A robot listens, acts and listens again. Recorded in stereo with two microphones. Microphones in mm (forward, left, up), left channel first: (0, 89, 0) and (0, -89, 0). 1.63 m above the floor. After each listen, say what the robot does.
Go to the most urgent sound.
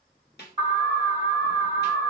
Turn 30° right.
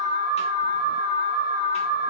Turn 115° right.
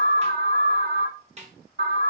Turn 40° right.
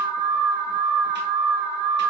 Drive 1.0 m forward.
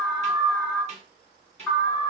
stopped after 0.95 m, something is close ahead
Turn 10° left.
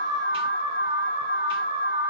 Arrived at the alarm, straight ahead.